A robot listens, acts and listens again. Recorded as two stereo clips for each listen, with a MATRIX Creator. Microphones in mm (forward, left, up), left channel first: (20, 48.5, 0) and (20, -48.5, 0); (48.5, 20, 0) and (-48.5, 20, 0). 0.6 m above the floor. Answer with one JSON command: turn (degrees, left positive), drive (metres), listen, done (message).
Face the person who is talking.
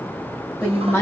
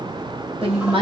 {"turn": 155}
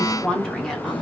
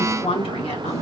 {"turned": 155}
{"done": "Facing the woman speaking, 1 to 2 m away."}